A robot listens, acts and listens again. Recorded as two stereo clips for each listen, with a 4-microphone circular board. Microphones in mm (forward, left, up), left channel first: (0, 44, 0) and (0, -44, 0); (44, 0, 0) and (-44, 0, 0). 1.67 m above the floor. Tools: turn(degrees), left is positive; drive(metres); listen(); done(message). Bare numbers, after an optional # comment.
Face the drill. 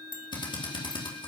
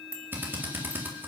# The drill: 115° left.
turn(115)
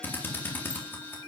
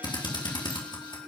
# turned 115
# The drill is now 25° left.
turn(25)
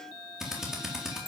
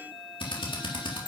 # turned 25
done("Found it: a drill, straight ahead, 2 to 4 m away.")